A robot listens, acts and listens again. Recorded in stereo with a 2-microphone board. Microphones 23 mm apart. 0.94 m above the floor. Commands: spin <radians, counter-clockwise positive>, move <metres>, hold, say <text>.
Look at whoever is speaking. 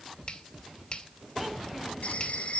hold
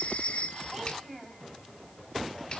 spin -0.52
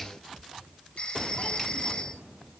hold
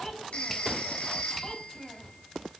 spin 0.44
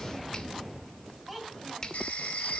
say Found it: a child speaking, straight ahead, over 4 m away.